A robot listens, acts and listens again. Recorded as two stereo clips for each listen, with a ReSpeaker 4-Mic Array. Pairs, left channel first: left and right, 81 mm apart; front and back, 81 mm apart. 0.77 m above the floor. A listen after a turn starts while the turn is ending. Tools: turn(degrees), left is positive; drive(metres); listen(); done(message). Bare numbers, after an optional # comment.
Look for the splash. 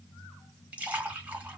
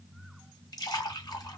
# The splash: 20° right.
turn(-20)
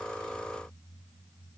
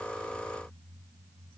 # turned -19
done("I heard a splash from this way, but can't make it out now.")